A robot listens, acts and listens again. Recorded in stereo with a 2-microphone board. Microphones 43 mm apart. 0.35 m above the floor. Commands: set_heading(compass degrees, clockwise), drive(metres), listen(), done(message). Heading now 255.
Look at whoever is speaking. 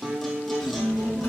set_heading(165)
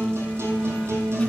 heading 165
listen()
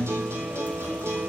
set_heading(130)
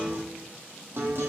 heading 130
listen()
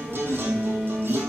set_heading(105)
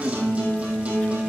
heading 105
listen()
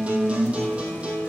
listen()
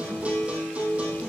done("Found it: a child speaking, straight ahead.")